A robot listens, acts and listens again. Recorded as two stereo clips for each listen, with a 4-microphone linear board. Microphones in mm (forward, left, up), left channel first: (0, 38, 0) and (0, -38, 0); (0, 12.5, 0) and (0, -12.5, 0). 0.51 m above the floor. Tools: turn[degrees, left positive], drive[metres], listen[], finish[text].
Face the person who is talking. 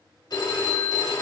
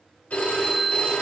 Action: listen[]
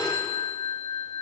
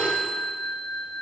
Action: listen[]
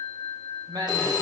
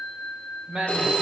Thought: The man speaking: about 60° right or 120° right.
Action: turn[-60]
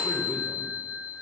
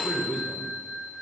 Action: listen[]
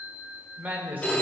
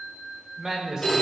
Thought: So it is at 30° right.
Action: turn[-30]
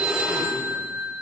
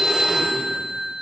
Action: listen[]
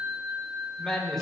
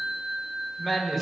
Action: finish[Found it: a man speaking, straight ahead, 1 to 2 m away.]